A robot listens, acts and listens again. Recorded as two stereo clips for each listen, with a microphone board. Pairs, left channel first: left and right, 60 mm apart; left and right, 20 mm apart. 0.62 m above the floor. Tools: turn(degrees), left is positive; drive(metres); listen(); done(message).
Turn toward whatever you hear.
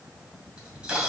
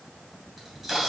turn(degrees=-20)
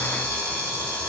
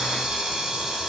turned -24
turn(degrees=-140)
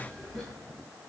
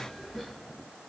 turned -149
turn(degrees=10)
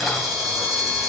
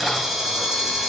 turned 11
done("Facing the camera shutter, 2 to 4 m away.")